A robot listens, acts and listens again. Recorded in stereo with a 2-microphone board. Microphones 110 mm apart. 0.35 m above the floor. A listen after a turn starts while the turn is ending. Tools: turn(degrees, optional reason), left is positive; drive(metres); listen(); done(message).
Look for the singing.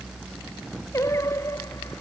turn(degrees=25, reason="The singing: about 25° left or 155° left.")
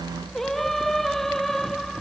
done("Found it: singing, straight ahead.")